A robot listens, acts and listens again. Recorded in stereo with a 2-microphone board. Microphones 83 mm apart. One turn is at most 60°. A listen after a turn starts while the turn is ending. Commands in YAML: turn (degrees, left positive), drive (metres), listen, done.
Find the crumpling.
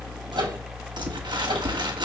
turn: -60
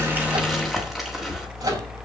listen: true
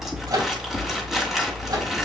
done: "Facing the crumpling."